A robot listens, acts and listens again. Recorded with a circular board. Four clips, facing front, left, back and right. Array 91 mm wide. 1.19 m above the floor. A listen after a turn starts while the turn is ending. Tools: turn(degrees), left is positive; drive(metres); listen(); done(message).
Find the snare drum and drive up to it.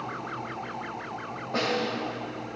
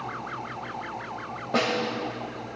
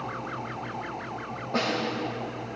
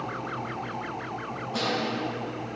turn(degrees=90)
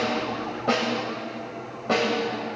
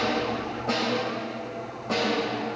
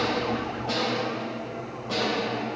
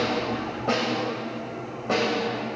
turn(degrees=-25)
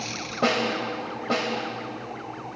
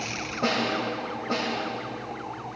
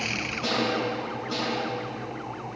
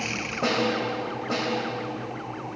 drive(metres=1.0)
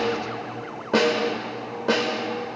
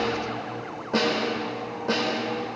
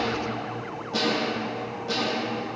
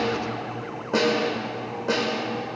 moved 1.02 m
turn(degrees=-10)
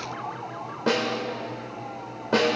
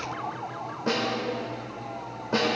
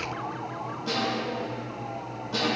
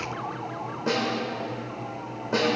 drive(metres=1.0)
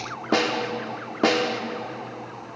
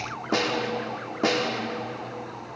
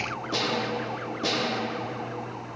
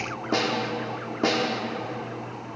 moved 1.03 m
drive(metres=1.0)
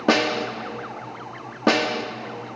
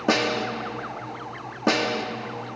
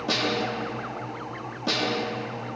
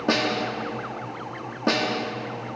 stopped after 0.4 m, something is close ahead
turn(degrees=10)
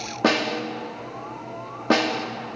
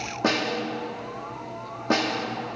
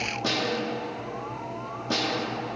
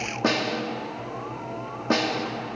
done("I am next to the snare drum.")